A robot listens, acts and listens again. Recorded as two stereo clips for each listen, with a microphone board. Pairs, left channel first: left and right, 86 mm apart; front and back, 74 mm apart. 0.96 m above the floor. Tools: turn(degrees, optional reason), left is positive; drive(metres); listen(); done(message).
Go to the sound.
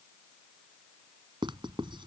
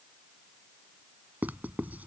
turn(degrees=-110, reason="The writing: 110° right.")
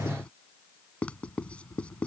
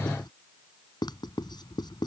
turn(degrees=15, reason="The writing is now 15° left.")
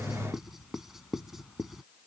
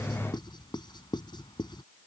drive(metres=1.0)
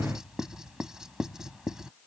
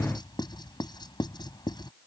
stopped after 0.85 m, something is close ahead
done("Blocked. The writing is further on, straight ahead.")